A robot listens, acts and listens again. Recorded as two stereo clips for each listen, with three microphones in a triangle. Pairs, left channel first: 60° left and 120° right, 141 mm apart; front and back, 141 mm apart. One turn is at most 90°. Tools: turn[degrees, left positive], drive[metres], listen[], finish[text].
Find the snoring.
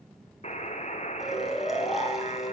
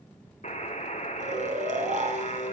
Thought: The snoring: 150° left.
Action: turn[90]
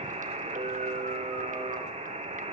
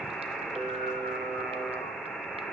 Thought: Nothing new. It was at 60° left.
Action: turn[60]
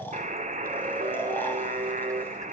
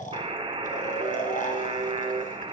Action: listen[]
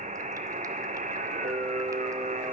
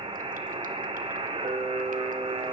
Action: finish[I heard snoring from this way, but can't make it out now.]